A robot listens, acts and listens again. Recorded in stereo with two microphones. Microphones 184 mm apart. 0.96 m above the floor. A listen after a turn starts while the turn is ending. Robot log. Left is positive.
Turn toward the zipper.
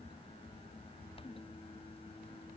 cmd idle
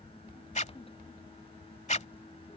note: The zipper: about 40° left or 140° left.
cmd yaw +40
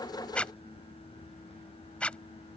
end: Found it: a zipper, straight ahead.